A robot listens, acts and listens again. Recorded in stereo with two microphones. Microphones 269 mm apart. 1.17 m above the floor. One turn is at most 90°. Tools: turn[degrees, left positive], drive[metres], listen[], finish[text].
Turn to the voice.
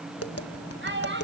Thought: The child speaking: about 45° right or 135° right.
Action: turn[-45]
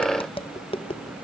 Action: listen[]
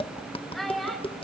Action: finish[Found it: a child speaking, straight ahead, over 4 m away.]